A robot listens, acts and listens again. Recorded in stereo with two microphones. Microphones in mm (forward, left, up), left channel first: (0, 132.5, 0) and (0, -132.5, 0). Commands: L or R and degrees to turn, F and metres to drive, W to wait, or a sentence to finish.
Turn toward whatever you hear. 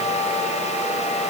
W
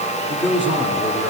L45
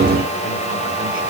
W
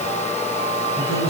W
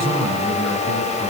L80
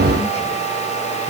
W
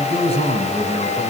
L25
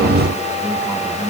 W
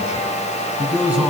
Found it: a man speaking, straight ahead, over 4 m away.